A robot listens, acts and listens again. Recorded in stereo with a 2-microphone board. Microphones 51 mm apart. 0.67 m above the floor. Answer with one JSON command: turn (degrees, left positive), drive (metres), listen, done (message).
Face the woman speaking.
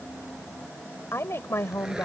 {"turn": 55}
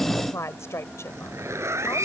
{"turn": 65}
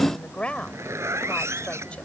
{"turn": 20}
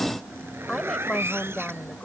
{"turn": 10}
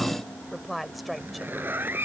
{"done": "Facing the woman speaking."}